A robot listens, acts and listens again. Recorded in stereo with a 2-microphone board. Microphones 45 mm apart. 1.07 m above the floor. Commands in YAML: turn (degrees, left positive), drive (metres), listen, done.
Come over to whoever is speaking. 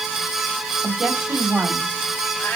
turn: -30
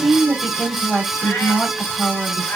turn: 20
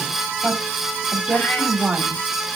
drive: 1.0
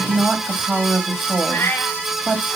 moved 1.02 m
drive: 1.0
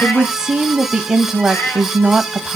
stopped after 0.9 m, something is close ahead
turn: -10
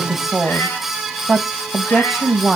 done: "I am next to the woman speaking."